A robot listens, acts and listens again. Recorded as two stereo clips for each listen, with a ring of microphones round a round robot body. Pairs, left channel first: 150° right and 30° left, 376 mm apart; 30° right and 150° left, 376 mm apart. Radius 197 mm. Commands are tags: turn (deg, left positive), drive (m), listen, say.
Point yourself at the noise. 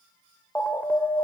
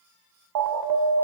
<turn deg="125"/>
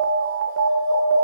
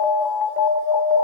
<turn deg="-20"/>
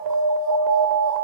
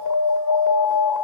<say>Facing the alarm, 2 to 4 m away.</say>